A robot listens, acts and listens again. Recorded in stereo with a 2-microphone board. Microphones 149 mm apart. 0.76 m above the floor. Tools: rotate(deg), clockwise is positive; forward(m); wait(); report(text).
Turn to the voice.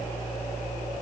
wait()
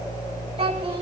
rotate(35)
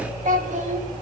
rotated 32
rotate(125)
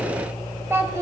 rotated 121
rotate(20)
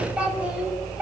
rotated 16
rotate(10)
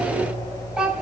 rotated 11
report("Facing the child speaking.")